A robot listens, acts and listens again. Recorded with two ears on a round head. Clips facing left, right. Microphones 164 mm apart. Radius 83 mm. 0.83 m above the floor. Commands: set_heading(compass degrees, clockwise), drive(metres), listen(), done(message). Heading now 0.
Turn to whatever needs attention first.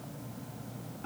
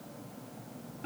listen()
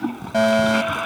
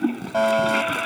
set_heading(345)
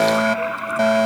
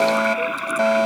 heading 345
done("Found it: a fire alarm, straight ahead.")